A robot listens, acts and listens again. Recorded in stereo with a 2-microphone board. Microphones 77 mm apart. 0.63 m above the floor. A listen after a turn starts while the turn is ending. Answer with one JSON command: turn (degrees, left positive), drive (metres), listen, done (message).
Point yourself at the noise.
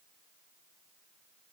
{"listen": true}
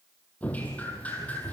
{"turn": 20}
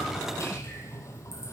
{"turn": 140}
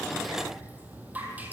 {"turn": -20}
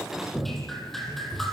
{"done": "Facing the dripping."}